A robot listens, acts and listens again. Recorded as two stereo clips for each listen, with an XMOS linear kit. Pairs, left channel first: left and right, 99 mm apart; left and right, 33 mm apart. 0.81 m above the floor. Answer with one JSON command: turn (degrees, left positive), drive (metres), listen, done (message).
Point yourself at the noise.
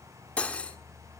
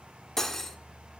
{"turn": 30}
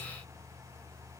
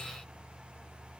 {"turn": 135}
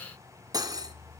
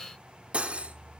{"turn": -40}
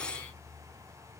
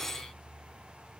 {"turn": 10}
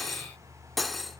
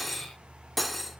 {"done": "Found it: cutlery clinking, straight ahead."}